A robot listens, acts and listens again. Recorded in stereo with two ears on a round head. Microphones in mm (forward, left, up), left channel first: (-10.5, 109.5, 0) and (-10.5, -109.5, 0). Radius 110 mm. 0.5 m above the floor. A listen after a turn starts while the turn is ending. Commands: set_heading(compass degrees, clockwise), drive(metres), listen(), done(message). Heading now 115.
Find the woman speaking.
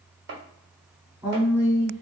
set_heading(145)
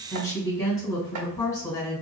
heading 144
set_heading(129)
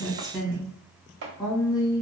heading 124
done("Facing the woman speaking.")